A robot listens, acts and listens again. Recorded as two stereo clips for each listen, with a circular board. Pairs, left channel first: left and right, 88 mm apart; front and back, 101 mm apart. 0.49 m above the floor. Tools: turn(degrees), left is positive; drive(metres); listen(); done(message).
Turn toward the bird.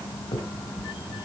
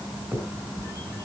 listen()
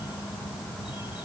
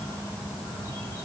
listen()
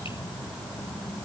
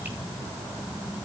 done("I can't make out a bird to turn to.")